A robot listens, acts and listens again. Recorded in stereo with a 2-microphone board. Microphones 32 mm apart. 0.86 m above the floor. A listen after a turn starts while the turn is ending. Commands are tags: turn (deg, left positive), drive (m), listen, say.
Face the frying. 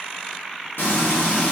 <turn deg="75"/>
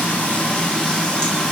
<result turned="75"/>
<turn deg="30"/>
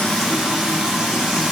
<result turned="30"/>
<turn deg="-10"/>
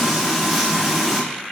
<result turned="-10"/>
<say>Facing the frying, under 1 m away.</say>